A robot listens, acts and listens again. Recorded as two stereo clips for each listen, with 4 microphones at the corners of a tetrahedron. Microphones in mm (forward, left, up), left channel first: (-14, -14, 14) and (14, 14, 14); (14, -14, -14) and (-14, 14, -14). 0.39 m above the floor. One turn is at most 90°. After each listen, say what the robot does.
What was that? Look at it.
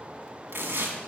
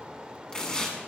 Turn 25° left.
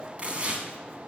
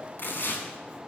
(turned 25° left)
Turn 15° right.
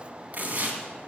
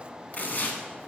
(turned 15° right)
Found it: tearing paper, straight ahead.